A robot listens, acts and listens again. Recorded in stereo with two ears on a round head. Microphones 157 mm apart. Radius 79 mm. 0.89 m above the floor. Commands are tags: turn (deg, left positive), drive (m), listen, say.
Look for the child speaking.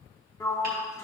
<listen/>
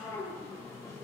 <listen/>
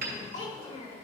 <turn deg="35"/>
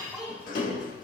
<say>Facing the child speaking.</say>